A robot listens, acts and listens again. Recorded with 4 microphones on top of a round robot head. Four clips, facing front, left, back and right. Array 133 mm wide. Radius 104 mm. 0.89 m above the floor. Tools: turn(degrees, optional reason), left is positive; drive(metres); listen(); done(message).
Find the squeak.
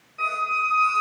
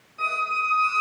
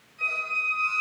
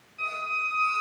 turn(degrees=35, reason="The squeak: 35° left.")
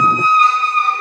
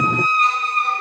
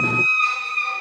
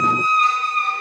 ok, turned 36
done("Found it: a squeak, straight ahead.")